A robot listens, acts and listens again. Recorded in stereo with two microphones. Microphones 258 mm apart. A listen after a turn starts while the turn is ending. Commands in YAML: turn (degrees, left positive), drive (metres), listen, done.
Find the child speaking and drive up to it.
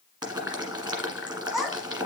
turn: 30
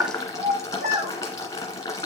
turn: -30
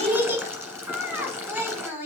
turn: -10
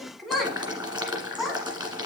drive: 1.0
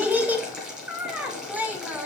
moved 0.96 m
turn: -10
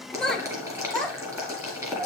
drive: 1.0
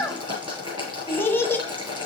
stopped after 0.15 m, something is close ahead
turn: 10
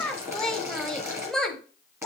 done: "Arrived at the child speaking, straight ahead."